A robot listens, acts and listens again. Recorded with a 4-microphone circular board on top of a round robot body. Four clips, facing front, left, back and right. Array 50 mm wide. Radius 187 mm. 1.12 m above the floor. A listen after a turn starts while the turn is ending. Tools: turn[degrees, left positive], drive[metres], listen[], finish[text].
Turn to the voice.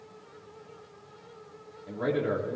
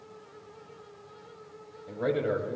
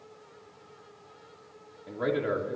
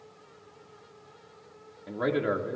Thought: The man speaking: 105° right.
Action: turn[-105]
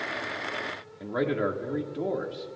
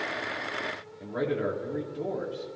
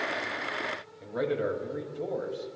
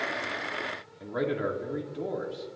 Thought: The man speaking is now 15° right.
Action: turn[-15]
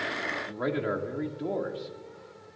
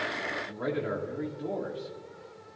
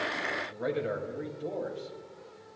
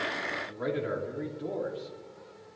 Action: finish[Found it: a man speaking, straight ahead, 2 to 4 m away.]